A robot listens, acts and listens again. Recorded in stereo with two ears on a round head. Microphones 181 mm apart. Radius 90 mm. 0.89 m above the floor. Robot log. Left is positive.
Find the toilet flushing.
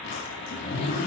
cmd idle
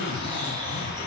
cmd idle
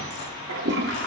note: The toilet flushing: about 60° right or 120° right.
cmd yaw -60
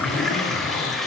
end: Facing the toilet flushing.